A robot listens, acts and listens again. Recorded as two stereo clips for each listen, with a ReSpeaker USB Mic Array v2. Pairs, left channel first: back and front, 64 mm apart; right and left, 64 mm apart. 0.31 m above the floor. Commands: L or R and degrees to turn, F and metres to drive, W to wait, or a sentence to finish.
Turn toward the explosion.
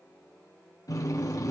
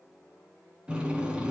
W
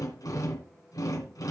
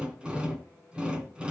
W
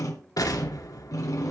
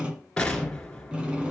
R165
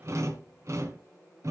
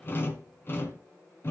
Facing where the explosion came from. I can't hear it now.